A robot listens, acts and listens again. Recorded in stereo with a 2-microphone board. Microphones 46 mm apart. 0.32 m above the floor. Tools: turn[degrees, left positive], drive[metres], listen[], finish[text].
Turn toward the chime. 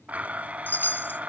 Thought: The chime: about 45° left or 135° left.
Action: turn[45]
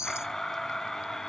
Thought: So it is at 90° left.
Action: turn[90]
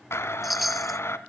Action: finish[Facing the chime.]